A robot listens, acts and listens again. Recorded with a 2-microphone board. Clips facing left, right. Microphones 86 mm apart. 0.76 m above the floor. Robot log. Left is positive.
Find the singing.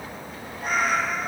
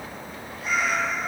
cmd idle
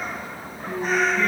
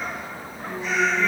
note: The singing: about 70° left or 110° left.
cmd yaw +70
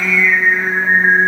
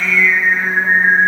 end: Found it: singing, straight ahead, over 4 m away.